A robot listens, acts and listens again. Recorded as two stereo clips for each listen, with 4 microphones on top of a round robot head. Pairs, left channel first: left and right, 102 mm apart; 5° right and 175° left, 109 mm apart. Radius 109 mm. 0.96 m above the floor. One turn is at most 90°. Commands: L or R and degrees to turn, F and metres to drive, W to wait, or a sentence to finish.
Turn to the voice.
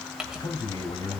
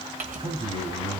L90
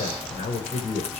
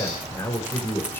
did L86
L65
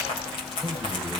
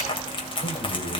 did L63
W
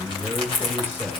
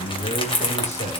L15
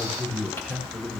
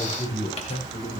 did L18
Facing the man speaking.